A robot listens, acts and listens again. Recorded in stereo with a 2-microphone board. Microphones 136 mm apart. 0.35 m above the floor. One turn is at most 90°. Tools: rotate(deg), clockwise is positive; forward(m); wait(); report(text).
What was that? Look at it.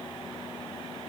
wait()
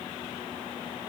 wait()
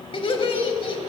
rotate(-45)
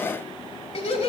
rotate(-75)
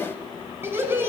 rotate(20)
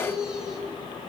report("Facing the laughter, 1 to 2 m away.")